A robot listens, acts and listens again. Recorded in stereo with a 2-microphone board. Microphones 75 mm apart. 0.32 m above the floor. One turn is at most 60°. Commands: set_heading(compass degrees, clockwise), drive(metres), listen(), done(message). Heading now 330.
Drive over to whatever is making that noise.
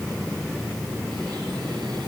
listen()
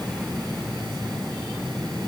listen()
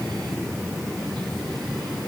done("I can't make out anything.")